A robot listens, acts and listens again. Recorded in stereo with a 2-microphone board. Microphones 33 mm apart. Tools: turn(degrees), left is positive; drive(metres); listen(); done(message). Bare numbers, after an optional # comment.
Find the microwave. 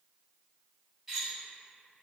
listen()
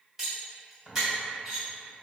listen()
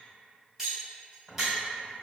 done("I can't make out a microwave to turn to.")